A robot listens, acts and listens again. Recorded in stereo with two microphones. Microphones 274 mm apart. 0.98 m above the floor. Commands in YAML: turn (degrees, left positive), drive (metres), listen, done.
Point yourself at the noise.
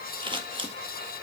turn: -20
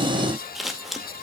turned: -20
done: "Found it: scissors, straight ahead, 2 to 4 m away."